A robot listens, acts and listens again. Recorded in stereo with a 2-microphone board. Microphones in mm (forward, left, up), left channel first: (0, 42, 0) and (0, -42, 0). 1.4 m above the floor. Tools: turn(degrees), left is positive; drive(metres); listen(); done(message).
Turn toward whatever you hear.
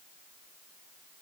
listen()
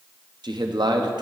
turn(degrees=-60)
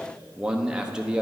turn(degrees=-10)
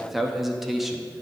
done("Found it: a man speaking, straight ahead, under 1 m away.")